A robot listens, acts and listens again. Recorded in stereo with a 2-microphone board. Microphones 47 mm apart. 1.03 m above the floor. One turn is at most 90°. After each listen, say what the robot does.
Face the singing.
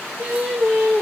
Turn 20° right.
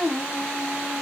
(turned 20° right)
Turn 30° right.
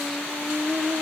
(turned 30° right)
Turn 15° right.
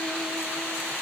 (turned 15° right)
Keep listening.
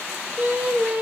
Turn 40° right.
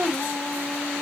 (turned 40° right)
Turn 10° right.
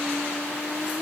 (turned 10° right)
Facing the singing.